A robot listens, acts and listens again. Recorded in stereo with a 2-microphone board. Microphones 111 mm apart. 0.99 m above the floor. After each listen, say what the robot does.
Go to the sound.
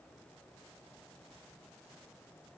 Keep listening.
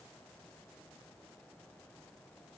Keep listening.
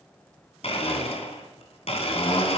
Turn 65° left.
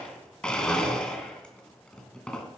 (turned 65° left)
Turn 10° left.
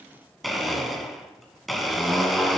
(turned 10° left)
Drive 1.0 m forward.
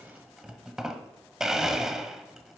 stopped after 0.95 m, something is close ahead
Arrived at the blender, straight ahead.